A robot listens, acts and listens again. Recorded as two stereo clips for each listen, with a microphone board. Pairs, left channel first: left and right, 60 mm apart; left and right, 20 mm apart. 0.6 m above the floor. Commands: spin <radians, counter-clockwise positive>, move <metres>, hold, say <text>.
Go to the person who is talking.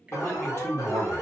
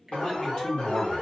spin 0.79
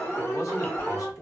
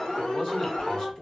spin 1.40
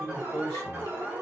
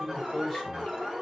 move 1.0
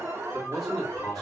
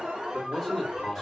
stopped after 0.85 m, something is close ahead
say Arrived at the man speaking, straight ahead.